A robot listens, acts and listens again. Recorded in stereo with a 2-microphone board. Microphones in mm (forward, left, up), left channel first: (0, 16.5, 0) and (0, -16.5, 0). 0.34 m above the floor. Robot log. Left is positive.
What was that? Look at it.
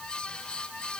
cmd idle
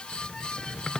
note: The squeak: about 15° left or 165° left.
cmd yaw +15
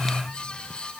cmd idle
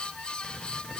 cmd idle
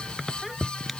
end: Facing the squeak.